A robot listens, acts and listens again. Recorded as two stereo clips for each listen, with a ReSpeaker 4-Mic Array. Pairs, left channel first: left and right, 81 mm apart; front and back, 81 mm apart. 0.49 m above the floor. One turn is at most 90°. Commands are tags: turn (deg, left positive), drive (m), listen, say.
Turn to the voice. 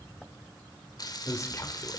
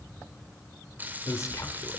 <turn deg="45"/>
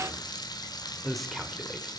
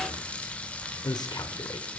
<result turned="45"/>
<say>Found it: a man speaking, straight ahead.</say>